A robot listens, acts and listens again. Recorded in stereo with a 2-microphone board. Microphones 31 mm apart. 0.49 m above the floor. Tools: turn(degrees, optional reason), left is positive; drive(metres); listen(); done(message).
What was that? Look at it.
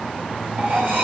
turn(degrees=-70, reason="The cutlery clinking: about 70° right or 110° right.")
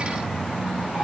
listen()
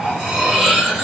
turn(degrees=-20, reason="So it is at 20° right.")
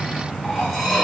done("Found it: cutlery clinking, straight ahead.")